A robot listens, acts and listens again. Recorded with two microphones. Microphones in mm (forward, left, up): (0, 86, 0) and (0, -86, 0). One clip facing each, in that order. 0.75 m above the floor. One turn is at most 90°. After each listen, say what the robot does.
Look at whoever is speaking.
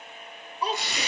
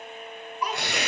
Turn 30° left.
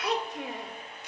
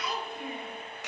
Turn 90° left.
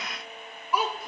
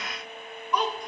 Facing the child speaking.